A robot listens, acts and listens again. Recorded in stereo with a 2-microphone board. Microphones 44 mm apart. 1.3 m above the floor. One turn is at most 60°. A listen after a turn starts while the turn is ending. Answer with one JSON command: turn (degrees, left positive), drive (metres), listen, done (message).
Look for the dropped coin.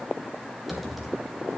{"listen": true}
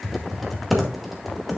{"listen": true}
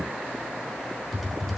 {"done": "I can't make out a dropped coin, only typing on a keyboard."}